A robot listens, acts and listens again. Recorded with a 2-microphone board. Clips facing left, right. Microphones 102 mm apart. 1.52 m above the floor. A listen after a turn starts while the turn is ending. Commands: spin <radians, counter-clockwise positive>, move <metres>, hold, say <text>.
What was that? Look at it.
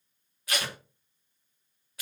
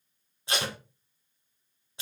spin -0.44
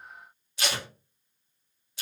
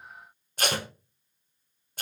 spin -2.27
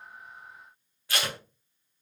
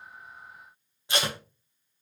spin -0.35
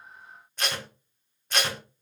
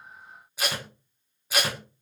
say Facing the tape being pulled.